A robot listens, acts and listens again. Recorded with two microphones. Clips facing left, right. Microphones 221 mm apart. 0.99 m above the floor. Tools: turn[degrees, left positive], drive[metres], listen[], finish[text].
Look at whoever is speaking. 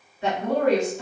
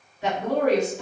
Thought: The woman speaking: about 15° left or 165° left.
Action: turn[15]
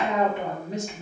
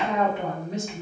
Thought: So it is at 150° left.
Action: turn[150]
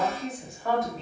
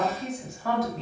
Action: finish[Found it: a woman speaking, straight ahead.]